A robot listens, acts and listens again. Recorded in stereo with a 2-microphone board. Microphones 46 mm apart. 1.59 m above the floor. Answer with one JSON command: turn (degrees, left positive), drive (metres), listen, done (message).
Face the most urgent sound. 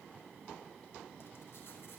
{"listen": true}
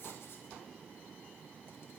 {"listen": true}
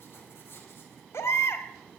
{"turn": 70}
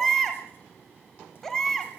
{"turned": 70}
{"turn": 10}
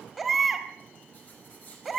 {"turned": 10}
{"done": "Facing the baby crying, 2 to 4 m away."}